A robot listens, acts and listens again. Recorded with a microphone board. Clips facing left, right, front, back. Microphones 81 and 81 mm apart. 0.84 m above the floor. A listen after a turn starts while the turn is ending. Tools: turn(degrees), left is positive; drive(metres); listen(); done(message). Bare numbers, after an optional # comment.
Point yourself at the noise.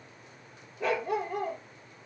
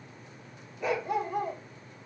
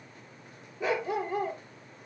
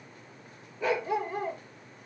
# The dog barking: 70° left.
turn(70)
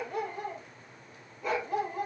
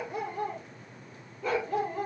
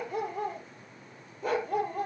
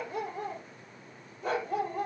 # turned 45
# The dog barking is now 15° left.
turn(15)
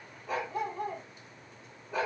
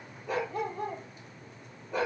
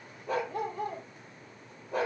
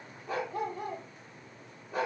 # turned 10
done("Found it: a dog barking, straight ahead, over 4 m away.")